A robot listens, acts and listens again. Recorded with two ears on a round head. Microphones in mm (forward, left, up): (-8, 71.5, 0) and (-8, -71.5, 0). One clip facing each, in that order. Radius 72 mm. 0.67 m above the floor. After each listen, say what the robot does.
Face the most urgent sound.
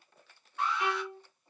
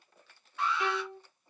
Turn 55° right.
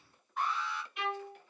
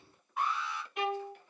Facing the alarm.